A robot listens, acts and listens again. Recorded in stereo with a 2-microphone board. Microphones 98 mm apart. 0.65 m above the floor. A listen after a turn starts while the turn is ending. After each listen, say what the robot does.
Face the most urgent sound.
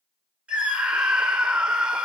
Turn 30° right.
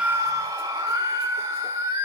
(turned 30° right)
Turn 140° right.
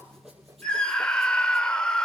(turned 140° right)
Turn 10° left.
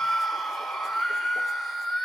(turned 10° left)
Found it: a scream, straight ahead, 2 to 4 m away.